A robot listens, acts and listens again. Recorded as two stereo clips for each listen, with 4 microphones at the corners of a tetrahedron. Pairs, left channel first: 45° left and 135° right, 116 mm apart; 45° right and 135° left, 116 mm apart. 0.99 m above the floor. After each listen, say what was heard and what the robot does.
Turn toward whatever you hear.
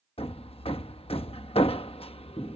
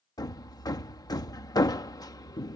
The hammering: 10° left. Turn 10° left.
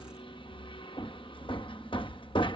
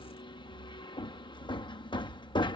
Facing the hammering.